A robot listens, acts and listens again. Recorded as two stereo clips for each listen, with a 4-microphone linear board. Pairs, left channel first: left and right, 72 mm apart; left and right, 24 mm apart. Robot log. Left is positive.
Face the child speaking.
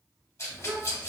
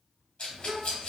note: The child speaking: about 35° right or 145° right.
cmd yaw -35
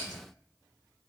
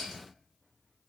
cmd idle
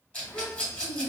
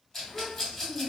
end: Facing the child speaking.